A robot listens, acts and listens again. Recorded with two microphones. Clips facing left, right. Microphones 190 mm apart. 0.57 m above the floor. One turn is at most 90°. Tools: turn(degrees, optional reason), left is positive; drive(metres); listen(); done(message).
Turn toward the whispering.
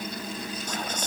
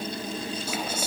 turn(degrees=-30)
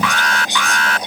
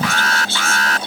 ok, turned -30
turn(degrees=15, reason="So it is at 15° left.")
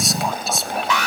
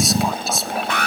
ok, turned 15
done("Facing the whispering.")